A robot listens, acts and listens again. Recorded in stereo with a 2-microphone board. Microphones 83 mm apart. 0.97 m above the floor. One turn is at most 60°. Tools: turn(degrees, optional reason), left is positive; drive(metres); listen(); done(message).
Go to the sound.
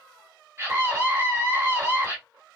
turn(degrees=-35, reason="The scream: about 35° right or 145° right.")
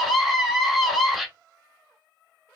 drive(metres=1.0)
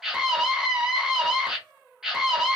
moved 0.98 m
turn(degrees=-10, reason="The scream is now 10° right.")
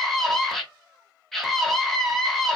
drive(metres=1.0)
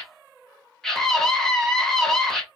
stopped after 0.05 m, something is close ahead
done("Arrived at the scream, straight ahead.")